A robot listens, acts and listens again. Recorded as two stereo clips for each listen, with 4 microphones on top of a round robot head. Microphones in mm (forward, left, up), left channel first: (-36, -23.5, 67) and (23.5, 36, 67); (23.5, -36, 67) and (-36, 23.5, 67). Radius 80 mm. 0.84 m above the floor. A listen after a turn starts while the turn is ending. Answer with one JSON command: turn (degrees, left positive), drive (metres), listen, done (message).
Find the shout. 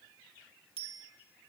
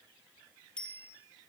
{"listen": true}
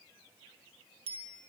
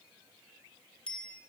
{"listen": true}
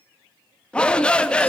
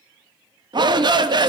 {"turn": 150}
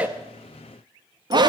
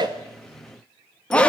{"turn": 30}
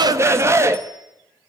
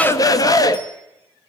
{"done": "Found it: a shout, straight ahead, 1 to 2 m away."}